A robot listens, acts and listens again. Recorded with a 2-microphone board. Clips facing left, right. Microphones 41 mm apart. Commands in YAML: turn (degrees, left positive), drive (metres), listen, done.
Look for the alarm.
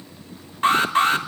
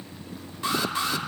turn: 45
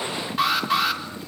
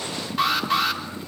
done: "Facing the alarm."